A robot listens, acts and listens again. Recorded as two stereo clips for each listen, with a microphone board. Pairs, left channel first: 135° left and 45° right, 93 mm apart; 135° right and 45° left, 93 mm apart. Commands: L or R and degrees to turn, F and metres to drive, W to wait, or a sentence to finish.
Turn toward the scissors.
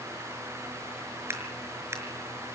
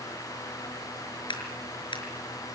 R105
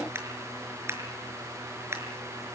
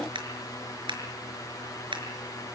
L15
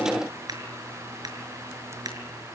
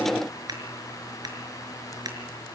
Found it: scissors, straight ahead, over 4 m away.